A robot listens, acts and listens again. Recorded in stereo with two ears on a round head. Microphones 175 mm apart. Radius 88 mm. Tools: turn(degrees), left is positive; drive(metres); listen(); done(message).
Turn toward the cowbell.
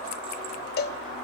turn(degrees=55)
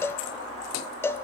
turn(degrees=15)
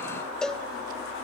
done("Found it: a cowbell, straight ahead.")